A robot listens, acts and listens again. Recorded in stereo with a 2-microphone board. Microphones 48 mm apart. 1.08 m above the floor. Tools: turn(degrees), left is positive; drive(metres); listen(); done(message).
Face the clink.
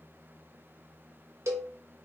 listen()
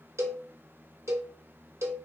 listen()
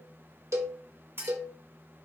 turn(degrees=-65)
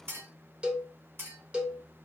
turn(degrees=-55)
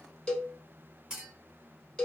turn(degrees=-15)
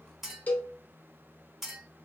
done("Facing the clink, 2 to 4 m away.")